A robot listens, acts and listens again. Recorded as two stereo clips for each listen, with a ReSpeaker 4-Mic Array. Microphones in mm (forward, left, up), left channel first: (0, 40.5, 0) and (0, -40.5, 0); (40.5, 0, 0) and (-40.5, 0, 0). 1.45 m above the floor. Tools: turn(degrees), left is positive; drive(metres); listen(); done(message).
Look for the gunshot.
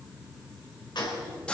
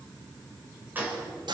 turn(degrees=115)
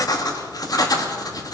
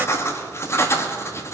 done("I heard a gunshot from this way, but can't make it out now.")